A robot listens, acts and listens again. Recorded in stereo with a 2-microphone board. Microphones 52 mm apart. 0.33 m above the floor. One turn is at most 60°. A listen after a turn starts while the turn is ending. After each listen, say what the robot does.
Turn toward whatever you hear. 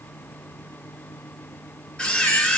Turn 15° left.
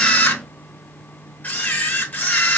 Turn 60° left.
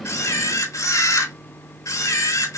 Turn 60° left.
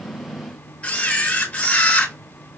Turn 25° left.
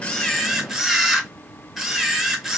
Turn 10° right.
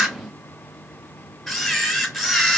Found it: a camera shutter, straight ahead.